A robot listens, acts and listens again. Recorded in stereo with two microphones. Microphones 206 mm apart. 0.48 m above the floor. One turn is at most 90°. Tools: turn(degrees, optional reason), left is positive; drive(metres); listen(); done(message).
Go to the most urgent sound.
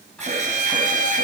turn(degrees=-35, reason="The alarm: about 35° right or 145° right.")
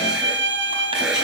drive(metres=1.0)
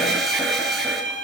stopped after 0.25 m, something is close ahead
listen()
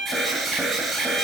done("Blocked. The alarm is further on, straight ahead.")